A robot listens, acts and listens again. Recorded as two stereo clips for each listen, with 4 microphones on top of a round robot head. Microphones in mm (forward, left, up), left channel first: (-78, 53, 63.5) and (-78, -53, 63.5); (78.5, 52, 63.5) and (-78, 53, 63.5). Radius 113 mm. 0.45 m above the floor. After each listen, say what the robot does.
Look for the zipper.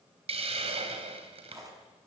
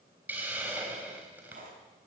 Turn 145° right.
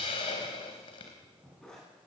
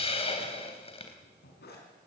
Found it: a zipper, straight ahead.